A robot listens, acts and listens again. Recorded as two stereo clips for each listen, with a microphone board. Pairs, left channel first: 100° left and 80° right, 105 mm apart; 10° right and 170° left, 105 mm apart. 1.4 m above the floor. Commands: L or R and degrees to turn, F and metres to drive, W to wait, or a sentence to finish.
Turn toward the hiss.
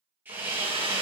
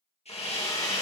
Found it: a hiss, straight ahead, 1 to 2 m away.